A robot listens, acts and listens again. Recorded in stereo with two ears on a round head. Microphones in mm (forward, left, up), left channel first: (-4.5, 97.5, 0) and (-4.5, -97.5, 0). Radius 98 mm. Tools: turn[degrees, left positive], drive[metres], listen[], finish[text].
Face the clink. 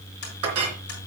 Action: turn[-90]
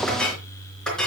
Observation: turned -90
Action: finish[Facing the clink, 2 to 4 m away.]